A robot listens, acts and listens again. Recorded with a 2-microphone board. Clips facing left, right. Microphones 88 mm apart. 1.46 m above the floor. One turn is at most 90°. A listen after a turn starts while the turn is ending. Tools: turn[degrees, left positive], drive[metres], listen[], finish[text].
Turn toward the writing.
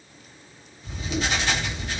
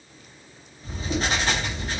Thought: The writing: about 40° right or 140° right.
Action: turn[-40]
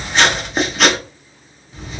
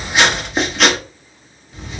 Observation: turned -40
Action: finish[Found it: writing, straight ahead, under 1 m away.]